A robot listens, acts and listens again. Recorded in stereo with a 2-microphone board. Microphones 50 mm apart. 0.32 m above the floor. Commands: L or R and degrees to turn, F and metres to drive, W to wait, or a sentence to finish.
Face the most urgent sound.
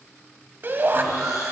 R45
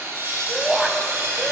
R10
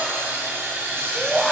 Found it: a shout, straight ahead, 1 to 2 m away.